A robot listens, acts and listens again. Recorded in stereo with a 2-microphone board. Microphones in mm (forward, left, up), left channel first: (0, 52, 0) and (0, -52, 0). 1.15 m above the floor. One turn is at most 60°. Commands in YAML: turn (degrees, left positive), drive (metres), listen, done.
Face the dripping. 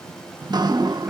turn: -40
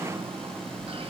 turn: -60
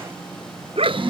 turn: -60
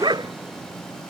listen: true
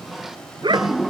done: "Found it: dripping, straight ahead."